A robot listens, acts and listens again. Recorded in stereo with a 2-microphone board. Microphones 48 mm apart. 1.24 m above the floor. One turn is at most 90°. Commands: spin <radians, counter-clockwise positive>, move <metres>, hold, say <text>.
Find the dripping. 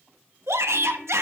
hold
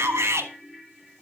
hold
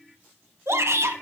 say I can't make out dripping to turn to.